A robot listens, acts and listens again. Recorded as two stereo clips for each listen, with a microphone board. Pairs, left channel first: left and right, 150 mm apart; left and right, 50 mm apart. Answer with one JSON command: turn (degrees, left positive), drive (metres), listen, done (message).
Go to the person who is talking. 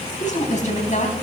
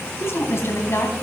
{"turn": 55}
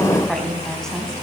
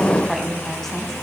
{"drive": 1.0}
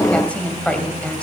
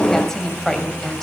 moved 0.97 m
{"turn": 10}
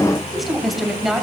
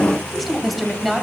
{"drive": 1.0}
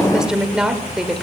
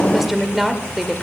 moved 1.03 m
{"drive": 1.0}
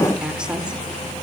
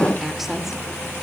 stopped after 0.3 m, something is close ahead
{"turn": -10}
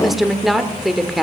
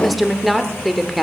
{"done": "Arrived at the woman speaking, straight ahead."}